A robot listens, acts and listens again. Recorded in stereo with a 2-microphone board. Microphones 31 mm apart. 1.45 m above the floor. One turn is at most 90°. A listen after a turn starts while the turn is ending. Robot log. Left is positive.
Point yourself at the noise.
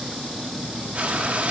note: The frying: about 50° right or 130° right.
cmd yaw -50
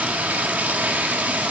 note: So it is at 75° right.
cmd yaw -75
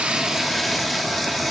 end: Found it: frying, straight ahead.